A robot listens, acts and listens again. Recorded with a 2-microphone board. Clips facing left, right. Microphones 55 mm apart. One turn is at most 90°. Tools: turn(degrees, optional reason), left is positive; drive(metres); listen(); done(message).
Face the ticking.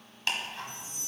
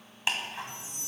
turn(degrees=-15, reason="The ticking: about 15° right or 165° right.")
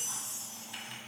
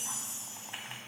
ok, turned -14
turn(degrees=-90, reason="So it is at 150° right.")
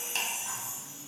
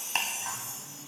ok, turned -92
turn(degrees=-55, reason="The ticking is now 55° right.")
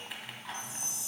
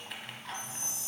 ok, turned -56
done("Found it: ticking, straight ahead.")